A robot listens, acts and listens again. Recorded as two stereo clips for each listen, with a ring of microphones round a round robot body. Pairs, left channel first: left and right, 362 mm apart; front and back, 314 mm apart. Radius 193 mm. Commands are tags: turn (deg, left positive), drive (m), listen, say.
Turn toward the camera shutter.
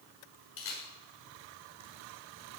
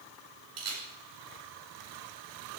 <turn deg="145"/>
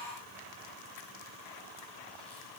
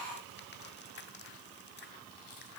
<listen/>
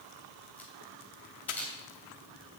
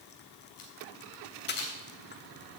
<say>Facing the camera shutter.</say>